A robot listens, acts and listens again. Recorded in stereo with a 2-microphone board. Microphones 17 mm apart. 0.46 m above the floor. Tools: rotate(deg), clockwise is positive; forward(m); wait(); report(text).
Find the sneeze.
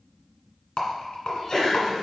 rotate(-40)
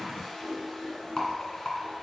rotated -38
wait()
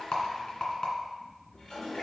report("I heard a sneeze, but can't make it out now. It was about 5° left or 100° left.")